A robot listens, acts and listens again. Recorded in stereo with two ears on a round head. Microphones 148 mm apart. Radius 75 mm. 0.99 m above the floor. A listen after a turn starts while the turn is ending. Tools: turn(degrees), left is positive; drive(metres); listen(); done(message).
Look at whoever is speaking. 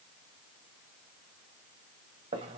listen()
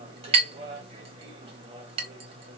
listen()
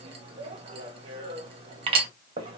done("I can't make out anyone speaking, only a clink.")